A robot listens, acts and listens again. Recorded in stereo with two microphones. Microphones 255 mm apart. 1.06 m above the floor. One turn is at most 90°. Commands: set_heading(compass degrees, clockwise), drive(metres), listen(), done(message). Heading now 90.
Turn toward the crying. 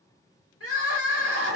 set_heading(30)
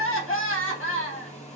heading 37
set_heading(337)
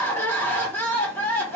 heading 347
set_heading(337)
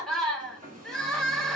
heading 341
done("Found it: crying, straight ahead, 1 to 2 m away.")